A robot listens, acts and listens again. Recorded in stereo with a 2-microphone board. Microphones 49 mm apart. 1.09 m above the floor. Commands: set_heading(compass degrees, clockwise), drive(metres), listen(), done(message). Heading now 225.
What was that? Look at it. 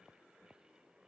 listen()
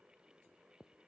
listen()
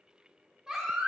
set_heading(255)
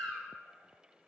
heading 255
set_heading(240)
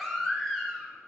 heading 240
done("Facing the baby crying, 1 to 2 m away.")